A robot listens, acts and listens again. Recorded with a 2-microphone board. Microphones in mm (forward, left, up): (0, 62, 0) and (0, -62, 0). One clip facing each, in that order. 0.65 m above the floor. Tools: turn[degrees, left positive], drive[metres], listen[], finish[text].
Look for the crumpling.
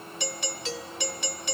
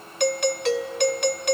Action: listen[]
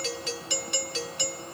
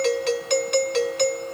Action: listen[]
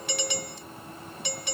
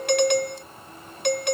Action: finish[I can't make out crumpling, only a doorbell.]